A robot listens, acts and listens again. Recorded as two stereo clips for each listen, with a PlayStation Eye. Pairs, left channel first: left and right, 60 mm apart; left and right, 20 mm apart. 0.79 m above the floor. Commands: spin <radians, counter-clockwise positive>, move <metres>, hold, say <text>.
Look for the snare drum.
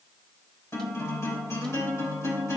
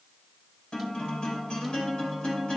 hold
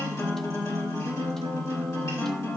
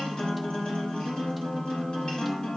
hold
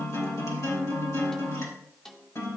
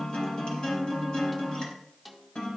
spin 0.52
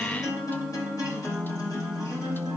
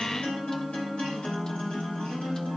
hold
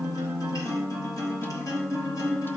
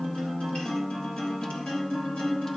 hold
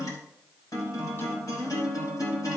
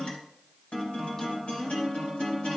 say I heard a snare drum, but can't make it out now. It was about 25° right or 145° left.